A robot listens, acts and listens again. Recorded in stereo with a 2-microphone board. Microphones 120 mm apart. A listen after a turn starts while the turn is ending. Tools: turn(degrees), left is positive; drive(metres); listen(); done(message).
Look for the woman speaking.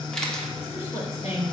turn(degrees=65)
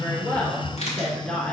turn(degrees=10)
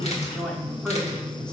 done("Found it: a woman speaking, straight ahead, 1 to 2 m away.")